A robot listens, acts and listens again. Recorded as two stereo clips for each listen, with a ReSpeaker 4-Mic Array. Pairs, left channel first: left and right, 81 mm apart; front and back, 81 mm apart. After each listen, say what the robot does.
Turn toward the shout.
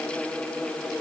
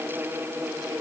Keep listening.
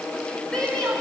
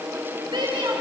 Turn 170° left.
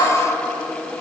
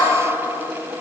Keep listening.
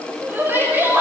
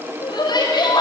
Turn 25° right.
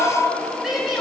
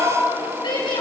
Facing the shout, over 4 m away.